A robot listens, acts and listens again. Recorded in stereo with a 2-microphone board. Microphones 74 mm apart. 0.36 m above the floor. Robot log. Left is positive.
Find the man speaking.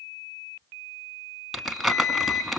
cmd idle
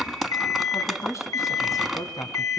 note: The man speaking: about 50° left or 130° left.
cmd yaw +50
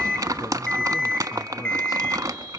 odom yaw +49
note: So it is at 55° left.
cmd yaw +55
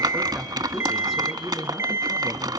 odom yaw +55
end: Facing the man speaking, 2 to 4 m away.